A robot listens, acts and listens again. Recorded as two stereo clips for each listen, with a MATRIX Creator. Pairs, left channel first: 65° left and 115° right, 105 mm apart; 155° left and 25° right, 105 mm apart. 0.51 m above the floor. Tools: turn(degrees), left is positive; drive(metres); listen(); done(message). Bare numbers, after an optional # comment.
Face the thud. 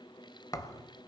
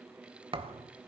# The thud: 10° left.
turn(10)
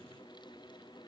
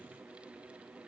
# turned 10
done("Facing where the thud came from. I can't hear it now.")